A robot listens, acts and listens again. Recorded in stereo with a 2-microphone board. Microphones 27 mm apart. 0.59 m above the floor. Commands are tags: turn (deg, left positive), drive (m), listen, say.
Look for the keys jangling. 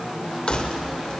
<turn deg="45"/>
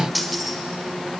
<say>Found it: keys jangling, straight ahead.</say>